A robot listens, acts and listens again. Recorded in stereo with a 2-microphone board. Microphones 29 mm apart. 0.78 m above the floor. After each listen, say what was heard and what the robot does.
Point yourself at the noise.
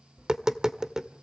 The tapping: about 20° right or 160° right. Turn 20° right.
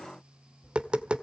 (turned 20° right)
So it is at 140° right. Turn 140° right.
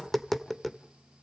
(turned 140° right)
Facing the tapping.